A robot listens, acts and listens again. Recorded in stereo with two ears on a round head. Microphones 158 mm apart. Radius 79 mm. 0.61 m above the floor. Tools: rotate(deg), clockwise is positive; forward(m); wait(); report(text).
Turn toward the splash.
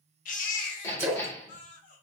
rotate(15)
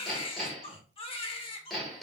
wait()
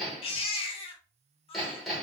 report("I heard a splash, but can't make it out now. It was about straight ahead or 150° right.")